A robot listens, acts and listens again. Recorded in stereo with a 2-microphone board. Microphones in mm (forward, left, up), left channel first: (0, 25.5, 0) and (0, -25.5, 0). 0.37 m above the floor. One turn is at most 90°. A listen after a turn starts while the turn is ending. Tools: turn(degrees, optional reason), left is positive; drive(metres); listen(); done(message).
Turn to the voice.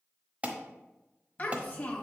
turn(degrees=30, reason="The child speaking: about 30° left or 150° left.")
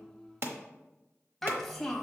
done("Facing the child speaking, 1 to 2 m away.")